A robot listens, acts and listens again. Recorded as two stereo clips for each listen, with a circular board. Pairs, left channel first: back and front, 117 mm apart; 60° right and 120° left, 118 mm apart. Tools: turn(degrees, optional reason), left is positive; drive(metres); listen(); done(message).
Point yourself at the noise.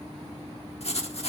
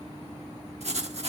turn(degrees=150, reason="The writing: 150° left.")
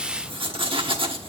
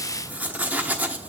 turn(degrees=45, reason="The writing is now 45° left.")
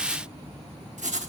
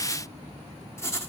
done("Found it: writing, straight ahead.")